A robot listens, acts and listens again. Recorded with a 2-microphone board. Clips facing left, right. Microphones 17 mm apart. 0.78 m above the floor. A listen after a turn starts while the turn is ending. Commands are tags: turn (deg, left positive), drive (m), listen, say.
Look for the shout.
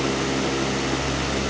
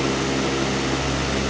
<listen/>
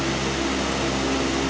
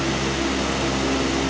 <listen/>
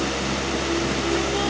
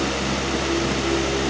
<say>I can't make out a shout to turn to.</say>